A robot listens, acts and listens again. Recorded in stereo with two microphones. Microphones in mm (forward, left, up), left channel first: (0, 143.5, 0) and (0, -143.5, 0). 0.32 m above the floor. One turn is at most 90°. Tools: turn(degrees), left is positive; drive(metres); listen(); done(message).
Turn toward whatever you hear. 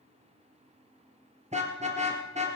turn(degrees=-25)
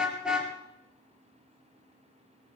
done("Found it: a car horn, straight ahead.")